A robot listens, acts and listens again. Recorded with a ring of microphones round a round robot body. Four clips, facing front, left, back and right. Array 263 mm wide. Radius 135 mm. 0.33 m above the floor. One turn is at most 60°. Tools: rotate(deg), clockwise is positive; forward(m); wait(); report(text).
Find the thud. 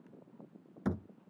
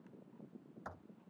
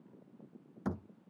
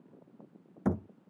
rotate(60)
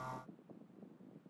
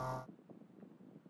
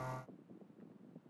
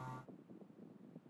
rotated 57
rotate(20)
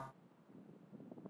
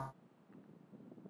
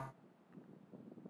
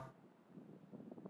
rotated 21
report("Facing where the thud came from. I can't hear it now.")